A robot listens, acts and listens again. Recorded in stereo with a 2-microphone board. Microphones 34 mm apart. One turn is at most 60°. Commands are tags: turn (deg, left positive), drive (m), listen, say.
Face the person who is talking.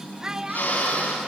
<turn deg="-25"/>
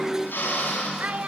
<turn deg="-60"/>
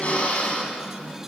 <turn deg="-60"/>
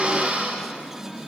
<turn deg="-10"/>
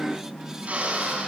<say>Facing where the child speaking came from. I can't hear it now.</say>